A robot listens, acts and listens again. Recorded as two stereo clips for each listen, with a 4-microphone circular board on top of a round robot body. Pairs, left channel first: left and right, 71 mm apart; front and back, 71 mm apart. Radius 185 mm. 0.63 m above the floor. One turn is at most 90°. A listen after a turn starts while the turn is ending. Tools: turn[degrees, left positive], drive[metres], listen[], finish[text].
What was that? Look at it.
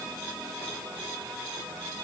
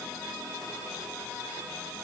Action: listen[]
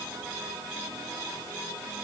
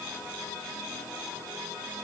Action: listen[]
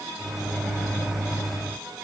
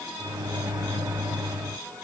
Thought: The microwave: straight behind.
Action: turn[90]
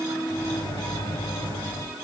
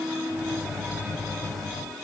Thought: The microwave is now 85° left.
Action: turn[85]
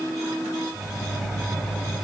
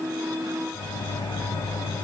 Action: finish[Facing the microwave.]